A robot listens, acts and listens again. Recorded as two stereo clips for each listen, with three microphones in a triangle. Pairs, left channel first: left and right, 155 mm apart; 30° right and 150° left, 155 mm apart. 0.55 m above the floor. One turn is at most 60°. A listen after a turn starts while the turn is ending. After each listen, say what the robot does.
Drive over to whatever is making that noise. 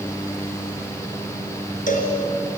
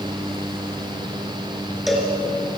Turn 60° left.
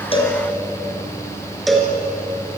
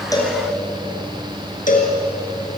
Drive 1.0 m forward.
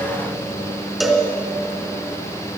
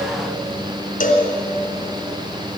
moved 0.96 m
Drive 1.0 m forward.
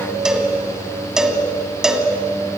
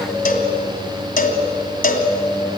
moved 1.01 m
Drive 1.0 m forward.
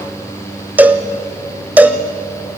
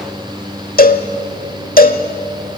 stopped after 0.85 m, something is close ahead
Turn 10° right.
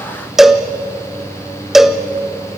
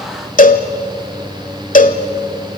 I am next to the cowbell.